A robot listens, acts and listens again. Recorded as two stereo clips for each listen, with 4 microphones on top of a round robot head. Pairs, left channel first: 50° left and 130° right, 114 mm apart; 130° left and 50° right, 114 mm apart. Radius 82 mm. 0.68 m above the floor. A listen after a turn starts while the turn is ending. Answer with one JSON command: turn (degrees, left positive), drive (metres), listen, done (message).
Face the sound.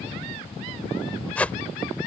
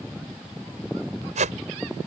{"turn": -30}
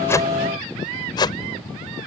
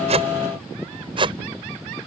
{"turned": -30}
{"done": "Found it: a whoosh, straight ahead."}